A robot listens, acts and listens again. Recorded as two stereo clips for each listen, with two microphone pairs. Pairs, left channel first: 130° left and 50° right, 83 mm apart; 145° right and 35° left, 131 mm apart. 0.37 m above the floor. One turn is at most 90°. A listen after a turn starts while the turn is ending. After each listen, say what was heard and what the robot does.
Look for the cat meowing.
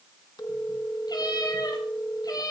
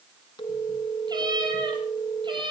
The cat meowing: 85° left. Turn 85° left.
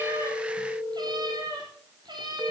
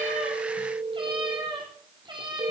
The cat meowing is now 20° right. Turn 20° right.
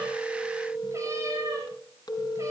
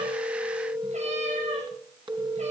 Keep listening.
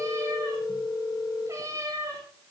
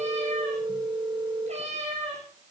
Facing the cat meowing.